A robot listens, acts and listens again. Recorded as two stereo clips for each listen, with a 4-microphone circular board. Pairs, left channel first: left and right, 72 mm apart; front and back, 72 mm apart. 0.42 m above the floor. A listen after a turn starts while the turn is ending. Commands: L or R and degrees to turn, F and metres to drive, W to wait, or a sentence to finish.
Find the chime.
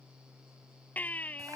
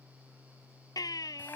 W
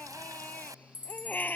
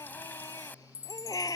R25
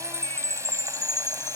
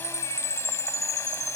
R10
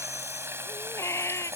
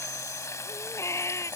W
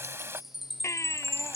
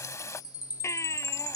Facing the chime.